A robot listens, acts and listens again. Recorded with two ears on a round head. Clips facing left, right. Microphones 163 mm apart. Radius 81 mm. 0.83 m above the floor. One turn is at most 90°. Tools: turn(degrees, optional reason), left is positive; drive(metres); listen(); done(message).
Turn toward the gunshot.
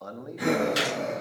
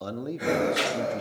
turn(degrees=45, reason="The gunshot: about 45° left or 135° left.")
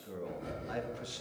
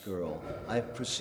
listen()
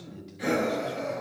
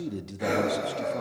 done("I heard a gunshot, but can't make it out now. It was about straight ahead or 90° left.")